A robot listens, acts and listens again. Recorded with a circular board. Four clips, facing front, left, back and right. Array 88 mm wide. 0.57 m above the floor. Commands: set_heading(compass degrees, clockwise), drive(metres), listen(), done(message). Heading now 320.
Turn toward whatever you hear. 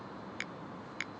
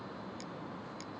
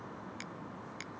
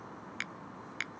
set_heading(20)
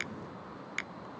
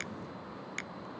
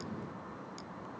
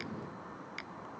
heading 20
set_heading(5)
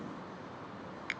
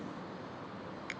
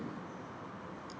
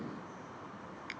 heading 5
done("Facing the finger snap.")